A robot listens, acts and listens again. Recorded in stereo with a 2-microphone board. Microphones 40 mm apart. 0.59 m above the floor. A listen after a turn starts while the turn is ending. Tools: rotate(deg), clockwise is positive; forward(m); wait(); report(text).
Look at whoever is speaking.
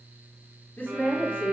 rotate(-40)
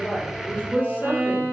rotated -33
rotate(-40)
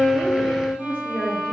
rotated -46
rotate(-35)
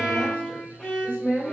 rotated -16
rotate(-35)
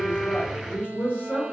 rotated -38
rotate(-120)
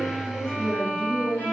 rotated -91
rotate(-10)
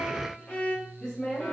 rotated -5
rotate(-10)
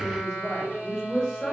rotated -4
report("Facing the woman speaking, 1 to 2 m away.")